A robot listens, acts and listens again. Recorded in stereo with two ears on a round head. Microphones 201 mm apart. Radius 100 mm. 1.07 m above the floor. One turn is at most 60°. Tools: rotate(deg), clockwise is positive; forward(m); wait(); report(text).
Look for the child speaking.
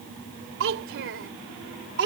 rotate(55)
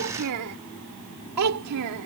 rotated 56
rotate(60)
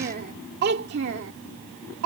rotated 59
rotate(60)
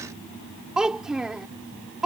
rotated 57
report("Facing the child speaking.")